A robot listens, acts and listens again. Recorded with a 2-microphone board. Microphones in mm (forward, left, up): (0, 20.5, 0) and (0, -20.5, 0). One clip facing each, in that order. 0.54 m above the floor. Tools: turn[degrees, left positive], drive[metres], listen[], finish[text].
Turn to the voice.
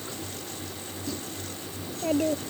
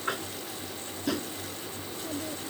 Thought: The child speaking: about 65° left or 115° left.
Action: turn[65]
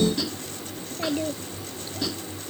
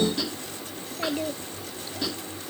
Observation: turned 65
Action: finish[Facing the child speaking.]